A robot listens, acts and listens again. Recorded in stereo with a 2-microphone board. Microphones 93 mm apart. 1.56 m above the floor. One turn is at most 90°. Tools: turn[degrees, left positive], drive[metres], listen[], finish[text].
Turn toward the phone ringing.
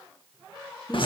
Action: listen[]
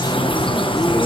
Action: listen[]
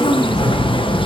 Action: finish[I can't make out a phone ringing to turn to.]